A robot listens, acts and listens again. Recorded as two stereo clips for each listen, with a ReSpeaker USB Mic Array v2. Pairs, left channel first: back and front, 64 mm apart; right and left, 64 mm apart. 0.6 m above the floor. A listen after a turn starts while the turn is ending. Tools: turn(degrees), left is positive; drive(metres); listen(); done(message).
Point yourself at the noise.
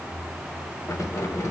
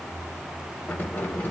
turn(degrees=-145)
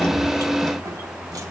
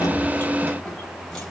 listen()
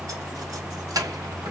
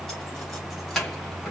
done("Found it: keys jangling, straight ahead, 2 to 4 m away.")